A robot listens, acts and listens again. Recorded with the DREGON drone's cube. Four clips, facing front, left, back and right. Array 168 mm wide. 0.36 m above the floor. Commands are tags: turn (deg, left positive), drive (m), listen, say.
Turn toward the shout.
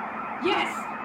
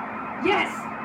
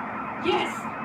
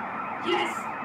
<turn deg="55"/>
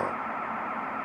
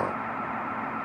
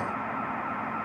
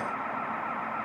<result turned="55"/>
<listen/>
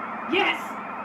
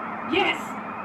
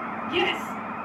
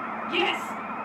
<turn deg="25"/>
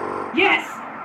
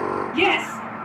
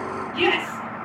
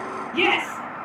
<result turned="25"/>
<say>Facing the shout.</say>